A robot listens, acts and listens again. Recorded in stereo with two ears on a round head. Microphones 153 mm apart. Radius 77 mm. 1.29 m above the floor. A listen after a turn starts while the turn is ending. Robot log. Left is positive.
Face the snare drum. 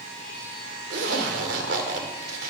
cmd idle
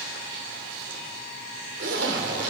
cmd idle
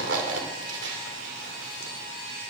end: I can't make out a snare drum, only a zipper.